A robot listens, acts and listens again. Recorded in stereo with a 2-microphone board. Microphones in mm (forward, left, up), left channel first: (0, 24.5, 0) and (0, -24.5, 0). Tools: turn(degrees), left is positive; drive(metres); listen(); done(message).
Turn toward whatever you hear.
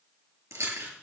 turn(degrees=-70)
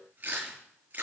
turn(degrees=-40)
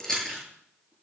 turn(degrees=10)
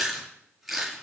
done("Facing the chewing, over 4 m away.")